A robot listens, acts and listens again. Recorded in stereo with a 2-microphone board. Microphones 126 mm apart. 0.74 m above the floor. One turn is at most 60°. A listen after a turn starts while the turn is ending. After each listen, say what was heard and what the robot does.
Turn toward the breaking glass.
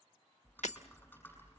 Turn 60° left.
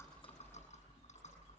Nothing new. It was at 30° left. Turn 30° left.
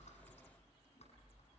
I heard breaking glass from this way, but can't make it out now.